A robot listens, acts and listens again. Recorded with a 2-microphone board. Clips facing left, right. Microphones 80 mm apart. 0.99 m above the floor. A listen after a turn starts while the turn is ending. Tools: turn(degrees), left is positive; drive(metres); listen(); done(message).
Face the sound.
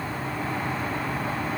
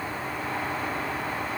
listen()
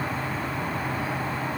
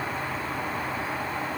listen()
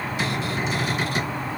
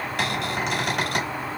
turn(degrees=-65)
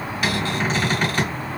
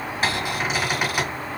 turn(degrees=-10)
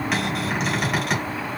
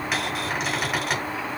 done("Found it: a cupboard door, straight ahead.")